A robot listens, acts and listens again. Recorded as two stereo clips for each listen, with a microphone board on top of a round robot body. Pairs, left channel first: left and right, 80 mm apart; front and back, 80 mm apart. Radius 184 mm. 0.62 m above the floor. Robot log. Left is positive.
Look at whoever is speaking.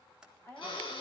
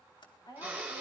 note: The woman speaking: 25° left.
cmd yaw +25
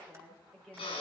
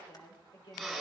end: Found it: a woman speaking, straight ahead, over 4 m away.